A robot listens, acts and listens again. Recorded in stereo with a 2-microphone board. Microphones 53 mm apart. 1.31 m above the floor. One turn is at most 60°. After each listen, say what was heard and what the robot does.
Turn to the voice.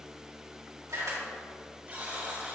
Keep listening.
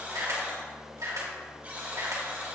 Keep listening.
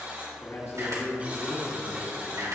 The man speaking: about 55° left or 125° left. Turn 55° left.
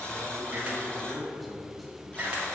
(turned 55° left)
Facing the man speaking, 2 to 4 m away.